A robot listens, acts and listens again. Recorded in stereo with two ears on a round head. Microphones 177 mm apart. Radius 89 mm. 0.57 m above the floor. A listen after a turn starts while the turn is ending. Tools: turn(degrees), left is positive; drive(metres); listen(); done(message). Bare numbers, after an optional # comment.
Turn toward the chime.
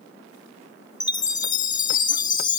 # The chime: about 20° left or 160° left.
turn(20)
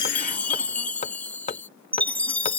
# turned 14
# So it is at 10° left.
turn(10)
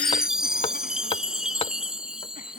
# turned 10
done("Found it: a chime, straight ahead.")